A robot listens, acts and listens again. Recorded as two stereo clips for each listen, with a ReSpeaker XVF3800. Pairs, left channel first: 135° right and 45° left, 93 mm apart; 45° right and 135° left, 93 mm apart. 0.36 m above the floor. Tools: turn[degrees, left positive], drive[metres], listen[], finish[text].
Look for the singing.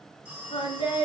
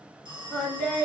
Thought: The singing: 125° right.
Action: turn[-125]
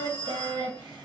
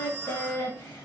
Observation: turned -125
Thought: The singing is now 10° left.
Action: turn[10]
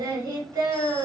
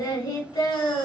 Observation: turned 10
Action: finish[Facing the singing.]